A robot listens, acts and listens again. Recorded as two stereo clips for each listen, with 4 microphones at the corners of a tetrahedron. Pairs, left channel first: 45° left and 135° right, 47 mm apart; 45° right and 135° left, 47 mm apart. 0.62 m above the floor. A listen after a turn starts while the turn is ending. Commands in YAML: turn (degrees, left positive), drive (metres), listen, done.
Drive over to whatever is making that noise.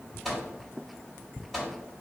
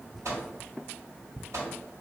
turn: 135
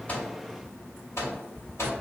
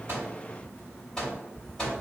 turn: 30
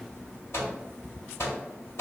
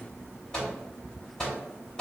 turn: 30
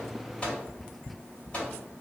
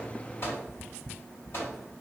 turn: -15
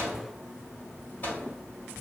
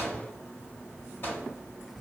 drive: 1.0
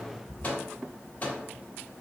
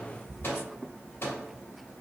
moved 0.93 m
drive: 1.0
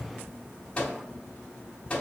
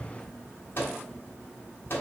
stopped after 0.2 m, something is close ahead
turn: -15
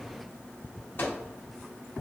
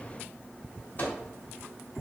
done: "I am next to the microwave."